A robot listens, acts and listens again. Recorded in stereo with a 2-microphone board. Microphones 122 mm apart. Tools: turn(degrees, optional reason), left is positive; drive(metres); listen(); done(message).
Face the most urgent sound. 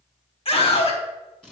turn(degrees=50, reason="The scream: about 50° left or 130° left.")
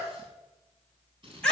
turn(degrees=10, reason="So it is at 10° left.")
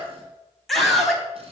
done("Facing the scream, 2 to 4 m away.")